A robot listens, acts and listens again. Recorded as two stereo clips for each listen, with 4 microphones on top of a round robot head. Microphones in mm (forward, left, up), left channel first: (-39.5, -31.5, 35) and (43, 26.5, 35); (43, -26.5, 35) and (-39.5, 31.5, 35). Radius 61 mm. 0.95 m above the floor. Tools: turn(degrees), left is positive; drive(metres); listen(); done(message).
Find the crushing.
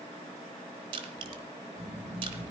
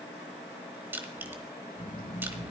turn(degrees=75)
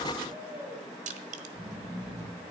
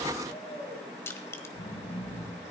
turn(degrees=30)
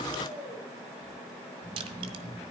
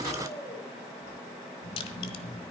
listen()
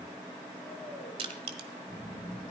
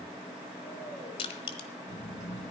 done("Found it: crushing, straight ahead.")